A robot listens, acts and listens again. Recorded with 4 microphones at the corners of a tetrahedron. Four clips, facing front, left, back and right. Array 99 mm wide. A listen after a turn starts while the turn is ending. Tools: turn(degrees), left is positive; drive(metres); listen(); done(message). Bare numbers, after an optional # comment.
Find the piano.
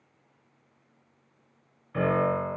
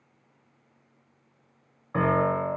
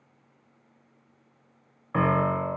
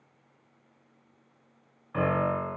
# The piano: 160° left.
turn(160)
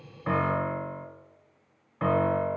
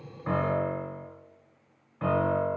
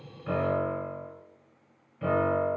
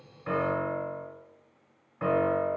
done("Found it: a piano, straight ahead.")